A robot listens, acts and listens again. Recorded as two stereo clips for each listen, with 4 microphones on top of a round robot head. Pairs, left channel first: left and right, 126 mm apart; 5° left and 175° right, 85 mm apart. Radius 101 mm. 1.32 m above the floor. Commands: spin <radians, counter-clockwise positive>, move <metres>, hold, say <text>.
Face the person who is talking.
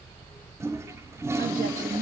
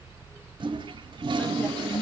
spin -1.40
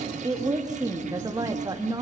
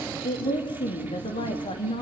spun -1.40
spin -0.52
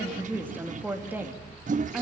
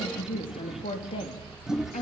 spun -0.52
spin -0.26
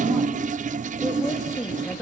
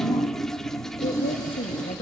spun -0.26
say Found it: a woman speaking, straight ahead.